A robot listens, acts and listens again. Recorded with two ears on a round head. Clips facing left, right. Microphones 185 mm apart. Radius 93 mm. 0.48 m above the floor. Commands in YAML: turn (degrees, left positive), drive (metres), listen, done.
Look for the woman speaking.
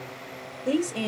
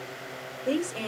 turn: 20
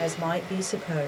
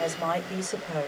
turn: 20
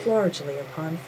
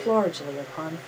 turn: 30
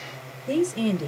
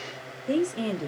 turn: 30
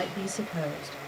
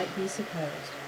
turn: 15
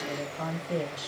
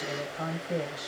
done: "Facing the woman speaking, 1 to 2 m away."